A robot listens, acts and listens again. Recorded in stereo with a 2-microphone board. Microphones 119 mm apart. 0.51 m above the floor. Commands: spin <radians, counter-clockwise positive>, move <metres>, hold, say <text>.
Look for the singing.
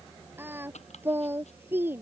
spin -0.35
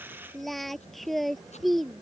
say Facing the singing.